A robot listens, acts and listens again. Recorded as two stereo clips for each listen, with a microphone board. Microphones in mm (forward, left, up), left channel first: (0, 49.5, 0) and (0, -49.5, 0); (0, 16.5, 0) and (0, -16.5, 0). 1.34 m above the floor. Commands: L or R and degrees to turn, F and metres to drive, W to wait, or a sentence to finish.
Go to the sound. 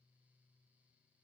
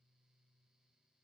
W
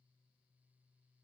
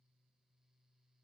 W
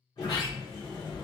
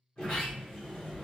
L40
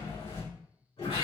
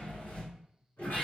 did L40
L95
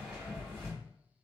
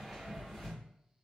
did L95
F1.0
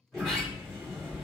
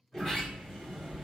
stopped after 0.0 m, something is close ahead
Blocked. The sliding door is further on, straight ahead.